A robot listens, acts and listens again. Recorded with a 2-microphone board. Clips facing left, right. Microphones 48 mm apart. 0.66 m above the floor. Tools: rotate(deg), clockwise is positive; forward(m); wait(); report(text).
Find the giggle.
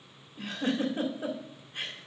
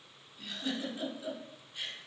rotate(-50)
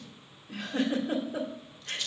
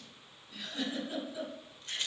rotate(-70)
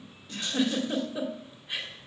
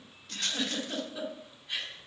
rotate(-20)
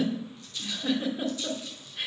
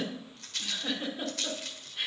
report("Facing the giggle, 2 to 4 m away.")